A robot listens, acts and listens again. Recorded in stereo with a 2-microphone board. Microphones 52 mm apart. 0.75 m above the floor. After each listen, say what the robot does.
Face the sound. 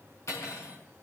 Turn 70° left.
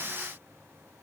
Keep listening.
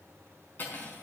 Turn 40° left.
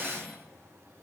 Facing the cutlery clinking.